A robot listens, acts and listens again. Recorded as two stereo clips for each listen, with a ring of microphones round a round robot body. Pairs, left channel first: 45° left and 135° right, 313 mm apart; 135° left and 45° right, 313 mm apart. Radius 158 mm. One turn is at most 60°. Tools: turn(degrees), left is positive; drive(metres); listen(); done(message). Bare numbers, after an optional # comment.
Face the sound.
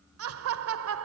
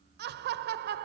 # The laughter: 100° right.
turn(-60)
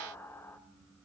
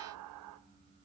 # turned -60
# The laughter is now 35° right.
turn(-35)
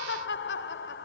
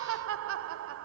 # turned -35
done("Found it: laughter, straight ahead, 1 to 2 m away.")